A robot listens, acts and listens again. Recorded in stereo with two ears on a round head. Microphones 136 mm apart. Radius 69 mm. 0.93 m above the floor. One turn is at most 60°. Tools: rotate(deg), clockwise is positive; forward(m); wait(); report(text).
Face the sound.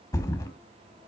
rotate(-20)
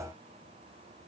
wait()
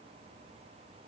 report("I heard a thud, but can't make it out now. It was about straight ahead or 140° left.")